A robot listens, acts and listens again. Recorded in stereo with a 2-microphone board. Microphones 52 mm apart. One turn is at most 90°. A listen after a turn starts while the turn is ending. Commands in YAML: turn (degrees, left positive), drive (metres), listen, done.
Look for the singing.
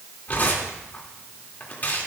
listen: true
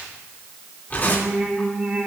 turn: -20
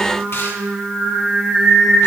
turn: -30
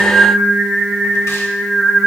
turn: -30
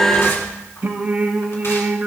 turn: -90
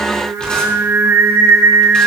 turn: -75
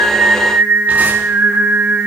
turn: -45
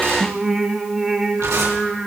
done: "Found it: singing, straight ahead."